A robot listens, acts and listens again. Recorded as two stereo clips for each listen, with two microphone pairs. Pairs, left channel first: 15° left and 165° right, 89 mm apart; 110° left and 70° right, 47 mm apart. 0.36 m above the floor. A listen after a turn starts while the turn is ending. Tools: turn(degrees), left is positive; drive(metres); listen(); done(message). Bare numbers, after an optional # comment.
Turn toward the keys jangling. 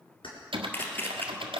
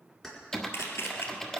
# The keys jangling: 25° left.
turn(25)
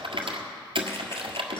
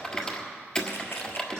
listen()
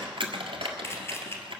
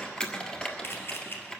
listen()
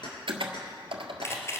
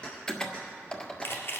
# The keys jangling is now 40° left.
turn(40)
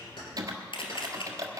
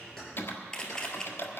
listen()
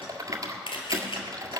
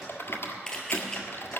listen()
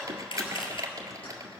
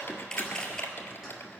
done("I heard keys jangling from this way, but can't make it out now.")